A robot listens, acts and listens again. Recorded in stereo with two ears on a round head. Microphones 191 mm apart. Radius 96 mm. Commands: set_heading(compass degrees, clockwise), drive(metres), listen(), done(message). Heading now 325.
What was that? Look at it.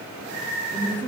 set_heading(295)
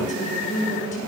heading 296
set_heading(156)
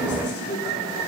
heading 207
set_heading(152)
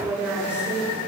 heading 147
set_heading(157)
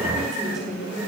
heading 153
done("Found it: a woman speaking, straight ahead, over 4 m away.")